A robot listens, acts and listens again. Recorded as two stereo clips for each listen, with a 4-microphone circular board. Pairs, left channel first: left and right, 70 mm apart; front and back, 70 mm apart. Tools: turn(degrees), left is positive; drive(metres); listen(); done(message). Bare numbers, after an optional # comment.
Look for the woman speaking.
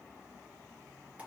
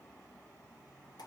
listen()
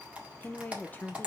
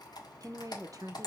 # The woman speaking: 155° left.
turn(155)
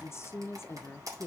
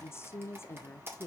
# The woman speaking is now 45° left.
turn(45)
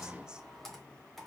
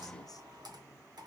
listen()
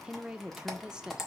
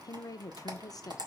# The woman speaking is now 10° right.
turn(-10)
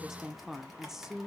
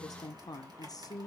done("Facing the woman speaking.")